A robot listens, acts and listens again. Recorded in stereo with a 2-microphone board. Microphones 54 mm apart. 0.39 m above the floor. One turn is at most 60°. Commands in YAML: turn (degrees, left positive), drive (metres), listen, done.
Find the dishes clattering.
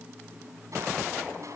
listen: true
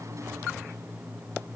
listen: true
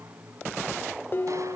turn: 40
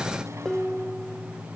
turn: 10
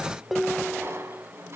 done: "Found it: dishes clattering, straight ahead."